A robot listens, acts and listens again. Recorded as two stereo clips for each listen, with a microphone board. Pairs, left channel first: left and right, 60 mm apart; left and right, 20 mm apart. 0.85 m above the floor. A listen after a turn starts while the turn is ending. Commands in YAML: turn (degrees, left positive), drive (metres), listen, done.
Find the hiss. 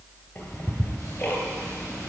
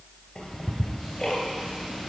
listen: true
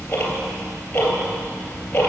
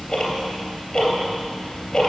listen: true
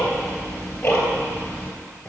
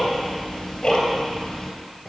done: "I can't make out a hiss, only ticking."